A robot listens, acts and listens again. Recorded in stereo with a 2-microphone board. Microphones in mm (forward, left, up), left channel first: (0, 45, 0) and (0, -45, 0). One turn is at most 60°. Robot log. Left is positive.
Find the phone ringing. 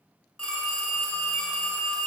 cmd yaw +30
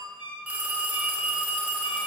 note: So it is at 15° right.
cmd yaw -15
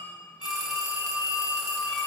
end: Facing the phone ringing, 1 to 2 m away.